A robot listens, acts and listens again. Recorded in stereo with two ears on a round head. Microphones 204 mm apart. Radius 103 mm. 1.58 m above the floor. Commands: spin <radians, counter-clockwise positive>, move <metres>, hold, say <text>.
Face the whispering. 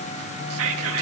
spin -1.22
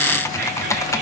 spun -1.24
hold
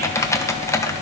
hold
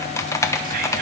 say I heard whispering, but can't make it out now. It was about straight ahead or 35° right.